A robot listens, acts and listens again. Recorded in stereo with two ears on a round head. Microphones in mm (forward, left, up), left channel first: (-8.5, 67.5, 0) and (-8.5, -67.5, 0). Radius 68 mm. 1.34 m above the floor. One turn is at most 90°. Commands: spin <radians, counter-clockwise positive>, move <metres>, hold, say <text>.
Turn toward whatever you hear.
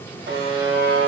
spin -1.57
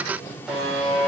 say Facing the buzzer.